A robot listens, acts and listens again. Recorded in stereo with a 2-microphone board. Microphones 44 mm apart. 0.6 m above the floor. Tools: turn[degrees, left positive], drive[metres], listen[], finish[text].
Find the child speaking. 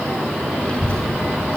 Thought: The child speaking: about 20° left or 160° left.
Action: turn[20]
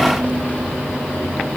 Action: listen[]
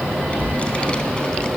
Thought: The child speaking: about 15° left or 165° left.
Action: turn[15]
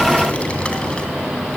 Thought: The child speaking: about 20° left or 160° left.
Action: turn[20]
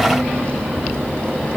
Thought: The child speaking: about 25° left or 155° left.
Action: turn[25]
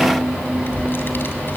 Thought: So it is at 125° left.
Action: turn[125]
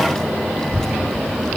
Thought: The child speaking is now 15° left.
Action: turn[15]
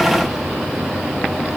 Action: listen[]
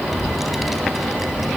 Action: finish[Found it: a child speaking, straight ahead, 2 to 4 m away.]